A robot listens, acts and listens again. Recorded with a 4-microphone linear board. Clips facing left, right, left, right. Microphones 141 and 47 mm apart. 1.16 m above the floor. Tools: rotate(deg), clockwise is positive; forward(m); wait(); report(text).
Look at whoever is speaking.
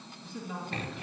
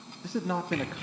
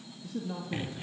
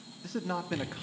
rotate(90)
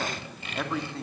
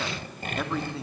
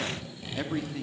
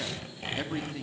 report("Found it: a man speaking, straight ahead, 2 to 4 m away.")